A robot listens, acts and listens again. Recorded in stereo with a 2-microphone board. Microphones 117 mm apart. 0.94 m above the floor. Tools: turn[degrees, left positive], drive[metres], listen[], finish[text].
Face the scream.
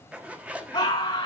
Thought: The scream: about 35° left or 145° left.
Action: turn[35]
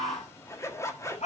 Thought: So it is at 110° left.
Action: turn[110]
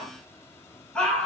Action: finish[Facing the scream.]